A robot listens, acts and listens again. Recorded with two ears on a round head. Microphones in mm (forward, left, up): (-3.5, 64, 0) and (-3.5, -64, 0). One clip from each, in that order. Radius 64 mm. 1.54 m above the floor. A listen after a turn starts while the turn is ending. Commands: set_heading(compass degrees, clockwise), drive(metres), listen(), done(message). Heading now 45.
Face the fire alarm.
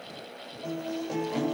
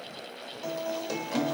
listen()
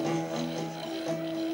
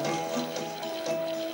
listen()
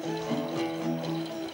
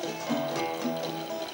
done("I can't make out a fire alarm to turn to.")